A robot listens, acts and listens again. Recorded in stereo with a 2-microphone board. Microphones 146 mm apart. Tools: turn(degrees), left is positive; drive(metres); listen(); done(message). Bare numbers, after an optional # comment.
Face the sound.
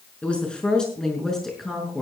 turn(30)
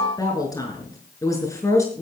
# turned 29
# So it is at 160° left.
turn(160)
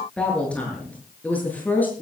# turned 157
# The woman speaking is now 10° left.
turn(10)
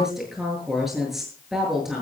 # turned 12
done("Facing the woman speaking, over 4 m away.")